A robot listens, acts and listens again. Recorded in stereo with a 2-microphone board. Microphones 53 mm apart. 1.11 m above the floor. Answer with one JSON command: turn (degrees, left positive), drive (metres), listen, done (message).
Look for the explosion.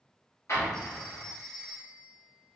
{"turn": 65}
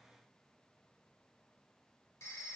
{"listen": true}
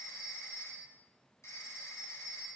{"done": "I heard an explosion, but can't make it out now. It was about straight ahead or 50° left."}